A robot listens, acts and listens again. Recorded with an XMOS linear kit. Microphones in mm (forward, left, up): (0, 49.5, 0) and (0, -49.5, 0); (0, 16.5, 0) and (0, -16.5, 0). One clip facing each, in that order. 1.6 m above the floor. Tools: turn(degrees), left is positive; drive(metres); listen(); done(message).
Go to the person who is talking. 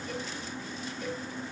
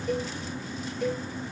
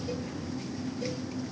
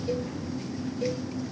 listen()
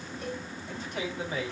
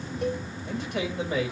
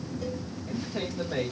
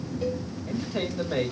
turn(degrees=-70)
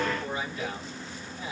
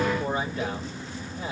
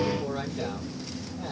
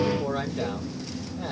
turn(degrees=-40)
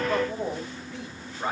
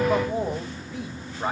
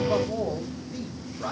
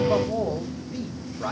drive(metres=1.0)
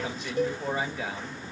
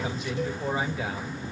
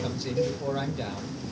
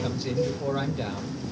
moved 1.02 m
drive(metres=1.0)
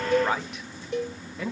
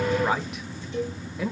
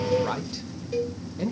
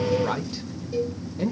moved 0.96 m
drive(metres=1.0)
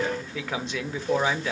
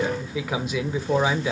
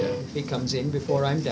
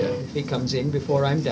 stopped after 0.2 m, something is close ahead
turn(degrees=-10)
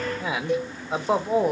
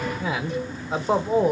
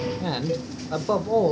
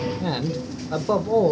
done("I am next to the man speaking.")